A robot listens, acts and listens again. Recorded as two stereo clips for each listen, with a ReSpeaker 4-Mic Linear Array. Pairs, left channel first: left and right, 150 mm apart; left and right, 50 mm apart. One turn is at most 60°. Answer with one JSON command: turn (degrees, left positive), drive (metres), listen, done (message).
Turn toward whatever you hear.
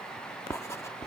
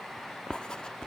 {"turn": 20}
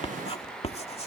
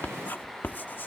{"turn": 60}
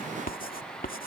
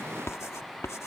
{"turn": 60}
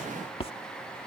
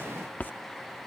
{"turn": 40}
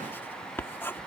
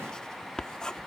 {"turn": 15}
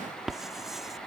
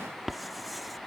{"done": "Found it: writing, straight ahead."}